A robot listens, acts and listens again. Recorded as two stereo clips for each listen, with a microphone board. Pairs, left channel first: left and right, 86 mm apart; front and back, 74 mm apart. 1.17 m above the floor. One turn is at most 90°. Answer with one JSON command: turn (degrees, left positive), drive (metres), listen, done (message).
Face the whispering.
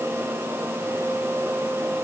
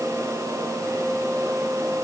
{"listen": true}
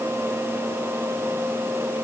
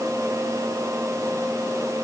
{"listen": true}
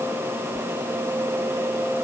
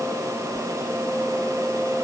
{"done": "I can't make out whispering."}